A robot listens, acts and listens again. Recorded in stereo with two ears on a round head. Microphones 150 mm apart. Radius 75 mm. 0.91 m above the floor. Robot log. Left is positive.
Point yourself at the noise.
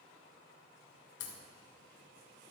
note: The crack: about 70° left or 110° left.
cmd yaw +70
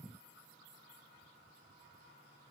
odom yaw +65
cmd idle
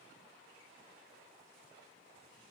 end: I heard a crack, but can't make it out now. It was about 5° left or 45° left.